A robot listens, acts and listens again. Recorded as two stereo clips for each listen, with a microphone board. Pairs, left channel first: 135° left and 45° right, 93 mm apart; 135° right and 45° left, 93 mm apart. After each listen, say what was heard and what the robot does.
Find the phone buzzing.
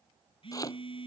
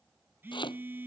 The phone buzzing: 115° left. Turn 115° left.
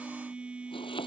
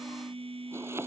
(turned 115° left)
The phone buzzing is now 35° left. Turn 35° left.
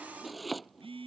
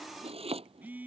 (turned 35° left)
The phone buzzing is now 30° right. Turn 30° right.
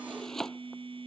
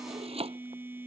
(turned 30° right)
The phone buzzing is now 25° right. Turn 25° right.
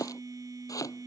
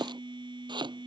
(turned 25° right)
The phone buzzing is now 10° left. Turn 10° left.
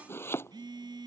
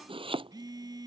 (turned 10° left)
Facing the phone buzzing.